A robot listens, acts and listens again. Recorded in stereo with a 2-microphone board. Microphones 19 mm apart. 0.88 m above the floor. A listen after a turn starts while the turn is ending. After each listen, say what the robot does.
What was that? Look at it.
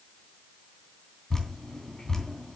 Turn 25° left.
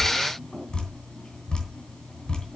Turn 130° left.
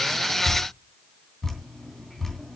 Turn 20° left.
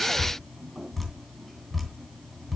Facing the dripping, 2 to 4 m away.